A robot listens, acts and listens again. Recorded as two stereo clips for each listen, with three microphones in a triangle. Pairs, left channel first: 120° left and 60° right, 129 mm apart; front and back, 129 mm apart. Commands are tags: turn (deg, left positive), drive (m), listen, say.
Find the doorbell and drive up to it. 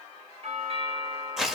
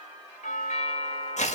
<turn deg="-20"/>
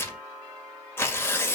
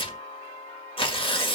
<drive m="1.0"/>
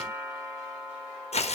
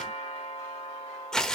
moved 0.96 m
<drive m="1.0"/>
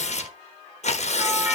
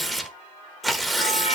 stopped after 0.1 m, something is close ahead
<listen/>
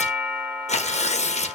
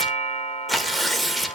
<turn deg="10"/>
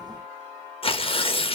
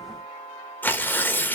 <say>I am next to the doorbell.</say>